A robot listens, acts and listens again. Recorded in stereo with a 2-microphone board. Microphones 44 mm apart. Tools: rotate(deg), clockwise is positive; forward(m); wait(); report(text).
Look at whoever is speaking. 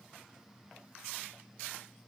wait()
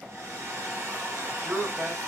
rotate(60)
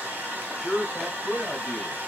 report("Found it: a man speaking, straight ahead.")